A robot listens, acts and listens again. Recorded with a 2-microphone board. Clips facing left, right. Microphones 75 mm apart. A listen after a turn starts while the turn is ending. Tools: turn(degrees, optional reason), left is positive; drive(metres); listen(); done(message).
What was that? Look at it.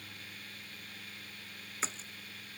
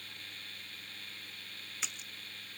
turn(degrees=35, reason="The splash: about 35° left or 145° left.")
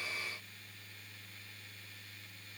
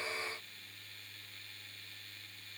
listen()
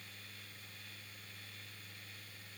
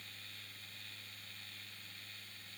done("I heard a splash, but can't make it out now. It was about straight ahead or 110° left.")